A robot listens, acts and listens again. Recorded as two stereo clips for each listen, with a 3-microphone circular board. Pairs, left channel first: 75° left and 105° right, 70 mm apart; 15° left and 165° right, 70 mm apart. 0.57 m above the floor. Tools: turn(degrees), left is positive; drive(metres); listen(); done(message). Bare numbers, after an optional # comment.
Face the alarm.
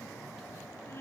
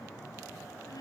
listen()
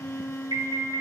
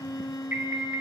# The alarm: 110° right.
turn(-110)
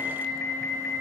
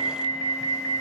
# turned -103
# The alarm is now 10° right.
turn(-10)
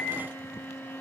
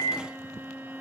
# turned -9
done("Found it: an alarm, straight ahead.")